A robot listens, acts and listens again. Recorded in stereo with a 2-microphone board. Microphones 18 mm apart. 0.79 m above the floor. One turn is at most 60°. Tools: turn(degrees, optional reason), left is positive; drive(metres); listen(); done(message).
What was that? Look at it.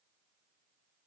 listen()
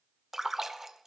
turn(degrees=-20, reason="The splash: about 20° right or 160° right.")
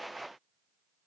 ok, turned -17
listen()
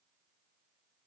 done("I heard a splash, but can't make it out now. It was about straight ahead or 145° right.")